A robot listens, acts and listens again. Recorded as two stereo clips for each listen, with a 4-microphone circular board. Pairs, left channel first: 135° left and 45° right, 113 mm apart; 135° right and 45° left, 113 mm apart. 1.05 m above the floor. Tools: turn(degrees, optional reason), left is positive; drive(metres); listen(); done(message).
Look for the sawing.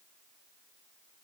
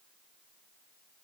listen()
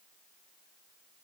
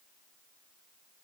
listen()
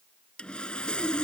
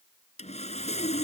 turn(degrees=-145, reason="The sawing: 145° right.")
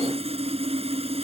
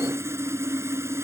turn(degrees=-20, reason="The sawing is now 20° right.")
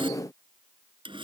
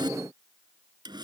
done("Facing the sawing.")